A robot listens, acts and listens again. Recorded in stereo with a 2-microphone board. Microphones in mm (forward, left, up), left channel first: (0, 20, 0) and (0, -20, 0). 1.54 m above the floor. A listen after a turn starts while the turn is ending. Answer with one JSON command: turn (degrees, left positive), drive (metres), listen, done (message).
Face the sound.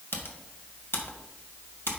{"turn": 75}
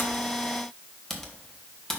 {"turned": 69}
{"done": "Found it: typing on a keyboard, straight ahead, 1 to 2 m away."}